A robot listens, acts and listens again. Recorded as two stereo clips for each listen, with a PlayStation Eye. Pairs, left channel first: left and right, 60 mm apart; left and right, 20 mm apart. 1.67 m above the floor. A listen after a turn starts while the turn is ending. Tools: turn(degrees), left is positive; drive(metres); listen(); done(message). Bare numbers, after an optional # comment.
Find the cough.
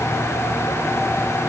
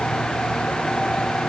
listen()
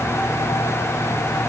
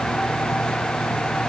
listen()
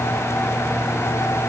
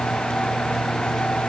done("I can't make out a cough.")